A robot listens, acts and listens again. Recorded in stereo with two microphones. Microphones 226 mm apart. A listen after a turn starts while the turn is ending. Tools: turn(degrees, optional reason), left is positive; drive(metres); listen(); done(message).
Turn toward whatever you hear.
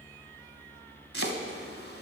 turn(degrees=-70, reason="The chopping: about 70° right or 110° right.")
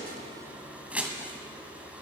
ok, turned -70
done("Facing the chopping.")